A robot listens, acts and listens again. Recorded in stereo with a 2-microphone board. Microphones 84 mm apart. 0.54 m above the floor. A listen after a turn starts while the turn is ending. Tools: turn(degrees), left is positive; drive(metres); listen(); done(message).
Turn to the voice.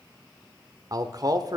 turn(degrees=-50)
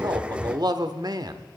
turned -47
turn(degrees=-70)
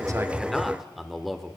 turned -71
done("Facing the man speaking.")